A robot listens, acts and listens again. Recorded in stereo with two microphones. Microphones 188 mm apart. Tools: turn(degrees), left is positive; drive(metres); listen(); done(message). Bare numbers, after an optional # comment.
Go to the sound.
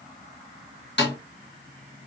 # The snare drum: about 70° left or 110° left.
turn(70)
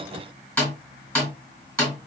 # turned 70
# So it is at 10° left.
turn(10)
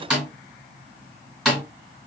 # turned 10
drive(1.0)
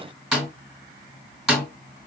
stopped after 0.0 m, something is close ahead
done("Something is in my way. I am facing the snare drum but have not reached it.")